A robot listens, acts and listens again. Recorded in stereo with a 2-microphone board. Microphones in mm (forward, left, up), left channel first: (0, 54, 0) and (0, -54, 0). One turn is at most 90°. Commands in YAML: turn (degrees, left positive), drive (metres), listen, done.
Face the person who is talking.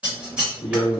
turn: 90
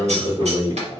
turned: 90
turn: -35
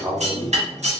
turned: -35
turn: -40
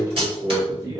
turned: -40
turn: -40
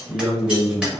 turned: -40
turn: -10
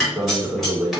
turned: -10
done: "Facing the man speaking, 1 to 2 m away."